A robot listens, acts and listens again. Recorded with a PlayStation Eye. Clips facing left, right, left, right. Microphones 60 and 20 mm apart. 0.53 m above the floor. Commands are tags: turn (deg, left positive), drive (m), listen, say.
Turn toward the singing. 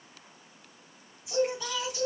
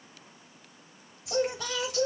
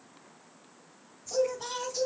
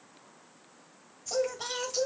<turn deg="-70"/>
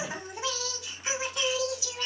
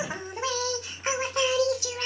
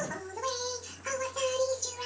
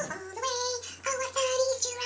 <turn deg="-60"/>
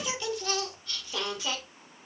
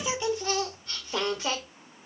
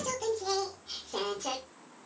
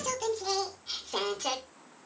<turn deg="-45"/>
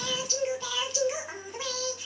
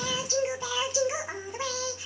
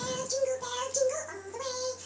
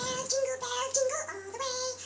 <turn deg="-20"/>
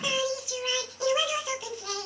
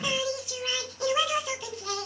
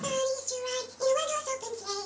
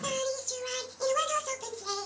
<say>Facing the singing.</say>